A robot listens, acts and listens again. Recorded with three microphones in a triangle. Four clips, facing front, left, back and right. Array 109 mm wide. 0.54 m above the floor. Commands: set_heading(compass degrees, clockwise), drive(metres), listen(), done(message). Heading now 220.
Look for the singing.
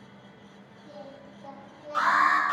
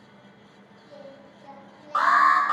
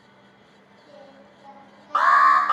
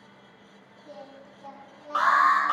set_heading(315)
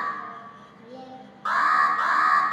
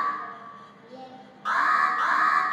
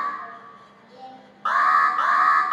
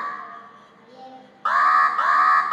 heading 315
set_heading(325)
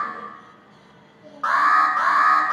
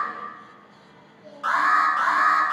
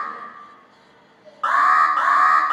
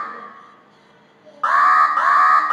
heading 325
done("Found it: singing, straight ahead, over 4 m away.")